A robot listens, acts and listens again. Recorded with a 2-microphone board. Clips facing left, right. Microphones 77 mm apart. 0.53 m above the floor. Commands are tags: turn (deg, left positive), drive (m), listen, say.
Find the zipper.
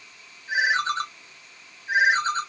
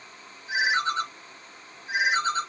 <listen/>
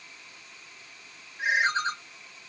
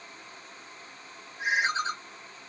<listen/>
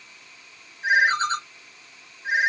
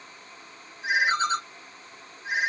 <say>I can't make out a zipper to turn to.</say>